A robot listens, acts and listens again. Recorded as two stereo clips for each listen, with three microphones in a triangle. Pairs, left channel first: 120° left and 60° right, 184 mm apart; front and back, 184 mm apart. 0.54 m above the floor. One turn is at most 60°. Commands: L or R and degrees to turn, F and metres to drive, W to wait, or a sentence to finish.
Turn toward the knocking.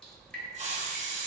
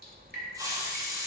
W
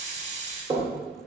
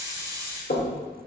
Found it: knocking, straight ahead, 1 to 2 m away.